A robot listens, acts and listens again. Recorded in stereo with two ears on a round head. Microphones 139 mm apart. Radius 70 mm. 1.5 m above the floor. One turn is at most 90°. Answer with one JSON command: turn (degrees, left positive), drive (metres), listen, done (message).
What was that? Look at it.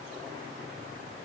{"listen": true}
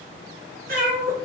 {"turn": -60}
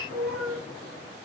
{"done": "Found it: a cat meowing, straight ahead, over 4 m away."}